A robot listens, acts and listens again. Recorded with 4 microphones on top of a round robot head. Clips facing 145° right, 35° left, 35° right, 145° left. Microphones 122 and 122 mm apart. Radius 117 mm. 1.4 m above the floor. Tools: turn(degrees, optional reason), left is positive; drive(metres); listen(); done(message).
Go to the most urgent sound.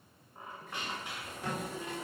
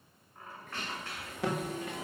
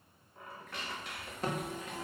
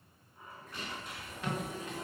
turn(degrees=15, reason="The alarm: 15° left.")
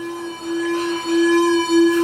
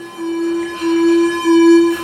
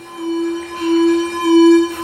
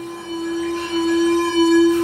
drive(metres=1.0)
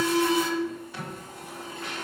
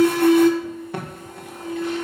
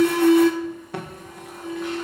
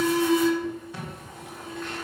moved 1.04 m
drive(metres=1.0)
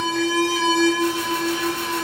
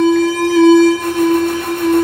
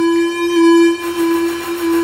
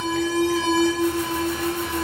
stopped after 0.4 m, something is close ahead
done("I am next to the alarm.")